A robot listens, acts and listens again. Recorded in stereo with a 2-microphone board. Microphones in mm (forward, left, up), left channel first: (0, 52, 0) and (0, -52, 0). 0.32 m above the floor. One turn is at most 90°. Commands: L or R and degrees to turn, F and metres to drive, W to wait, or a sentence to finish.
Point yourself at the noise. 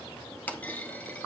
L15
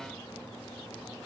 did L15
W
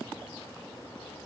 I heard a clunk, but can't make it out now. It was about straight ahead or 150° left.